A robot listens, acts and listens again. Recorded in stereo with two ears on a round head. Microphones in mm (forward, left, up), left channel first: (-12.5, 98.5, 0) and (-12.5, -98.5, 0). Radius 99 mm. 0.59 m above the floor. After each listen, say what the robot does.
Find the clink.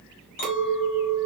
Turn 40° left.
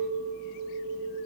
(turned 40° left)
Found it: a clink, straight ahead.